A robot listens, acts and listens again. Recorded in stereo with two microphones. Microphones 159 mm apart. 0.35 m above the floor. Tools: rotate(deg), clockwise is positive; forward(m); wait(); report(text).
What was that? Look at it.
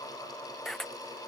rotate(-30)
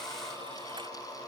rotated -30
wait()
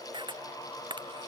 rotate(30)
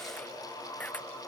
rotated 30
rotate(-10)
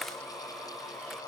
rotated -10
wait()
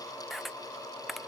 report("Found it: a camera shutter, straight ahead.")